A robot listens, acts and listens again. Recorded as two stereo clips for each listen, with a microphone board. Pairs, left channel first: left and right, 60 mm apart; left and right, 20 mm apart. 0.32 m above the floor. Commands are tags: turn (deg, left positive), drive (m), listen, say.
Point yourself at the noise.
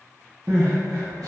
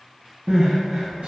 <turn deg="-90"/>
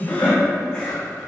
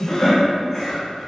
<turn deg="15"/>
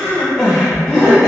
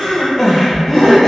<say>Facing the crying.</say>